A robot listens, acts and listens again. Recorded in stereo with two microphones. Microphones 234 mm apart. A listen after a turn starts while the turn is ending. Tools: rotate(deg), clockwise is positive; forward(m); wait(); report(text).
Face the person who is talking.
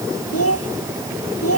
rotate(-90)
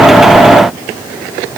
wait()
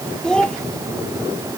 report("Found it: a child speaking, straight ahead.")